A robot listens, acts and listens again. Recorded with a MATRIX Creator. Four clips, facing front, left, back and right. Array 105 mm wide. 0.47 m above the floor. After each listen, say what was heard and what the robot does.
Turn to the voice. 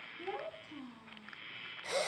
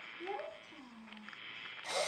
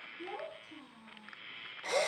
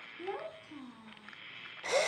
The child speaking: 75° right. Turn 75° right.
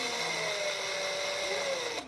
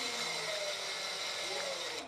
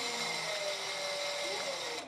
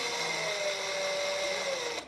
Keep listening.
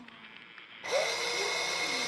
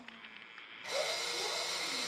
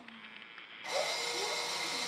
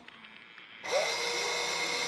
Keep listening.
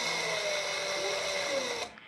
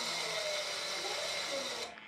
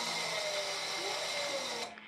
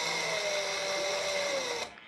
I heard a child speaking from this way, but can't make it out now.